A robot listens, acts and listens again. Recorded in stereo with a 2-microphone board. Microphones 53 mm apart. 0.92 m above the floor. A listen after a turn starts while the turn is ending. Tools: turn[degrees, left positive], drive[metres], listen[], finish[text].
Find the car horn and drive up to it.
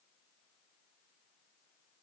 Action: listen[]
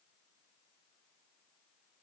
Action: listen[]
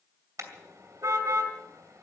Action: turn[-90]
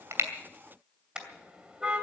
Thought: So it is at 15° right.
Action: turn[-15]
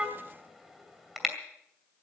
Action: drive[1.0]
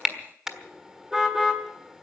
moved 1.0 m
Action: drive[1.0]
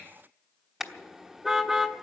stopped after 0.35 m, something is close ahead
Action: finish[I am next to the car horn.]